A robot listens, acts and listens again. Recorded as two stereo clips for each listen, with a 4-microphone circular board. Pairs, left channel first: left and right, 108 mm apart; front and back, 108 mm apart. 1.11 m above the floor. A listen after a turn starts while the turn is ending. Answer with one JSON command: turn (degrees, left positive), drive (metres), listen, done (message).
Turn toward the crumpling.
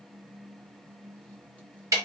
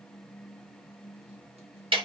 {"listen": true}
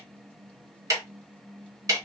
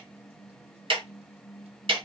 {"listen": true}
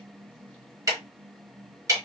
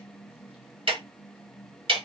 {"done": "I can't make out crumpling, only ticking."}